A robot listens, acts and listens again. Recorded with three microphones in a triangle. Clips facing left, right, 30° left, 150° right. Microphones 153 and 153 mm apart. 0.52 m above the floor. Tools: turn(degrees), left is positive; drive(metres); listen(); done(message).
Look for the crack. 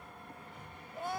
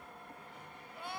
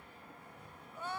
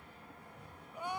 listen()
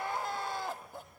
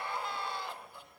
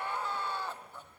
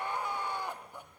listen()
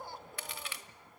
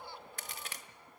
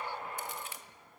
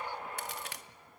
turn(degrees=-135)
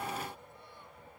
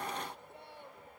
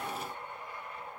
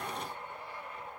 done("Facing where the crack came from. I can't hear it now.")